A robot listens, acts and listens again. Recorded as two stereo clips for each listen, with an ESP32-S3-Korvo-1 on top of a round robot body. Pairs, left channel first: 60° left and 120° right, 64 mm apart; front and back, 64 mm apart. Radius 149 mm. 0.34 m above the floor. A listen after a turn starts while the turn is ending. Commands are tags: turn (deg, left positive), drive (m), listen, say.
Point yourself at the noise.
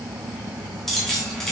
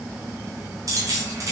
<turn deg="145"/>
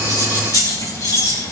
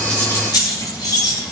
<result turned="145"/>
<turn deg="30"/>
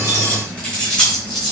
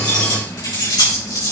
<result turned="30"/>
<turn deg="-15"/>
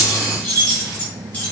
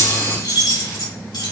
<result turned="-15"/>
<say>Found it: keys jangling, straight ahead, over 4 m away.</say>